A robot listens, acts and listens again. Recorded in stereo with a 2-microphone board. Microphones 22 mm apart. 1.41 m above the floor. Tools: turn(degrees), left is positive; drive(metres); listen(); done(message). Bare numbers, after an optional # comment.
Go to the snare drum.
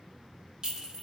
listen()
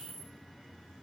listen()
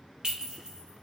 done("I can't make out a snare drum, only a clink.")